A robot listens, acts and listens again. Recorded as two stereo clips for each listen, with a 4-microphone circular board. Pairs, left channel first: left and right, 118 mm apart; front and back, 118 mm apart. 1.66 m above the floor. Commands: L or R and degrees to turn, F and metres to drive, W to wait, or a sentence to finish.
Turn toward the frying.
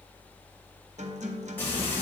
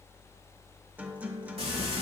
L160
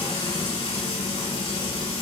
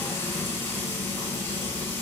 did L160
L65
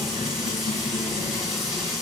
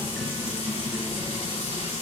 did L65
Facing the frying.